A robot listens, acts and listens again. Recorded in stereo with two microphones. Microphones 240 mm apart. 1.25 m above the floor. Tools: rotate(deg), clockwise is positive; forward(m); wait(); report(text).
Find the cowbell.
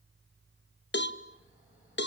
rotate(-50)
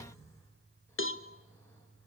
rotate(-70)
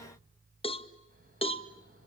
rotate(-25)
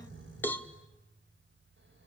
rotate(-10)
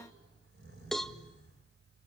report("Facing the cowbell.")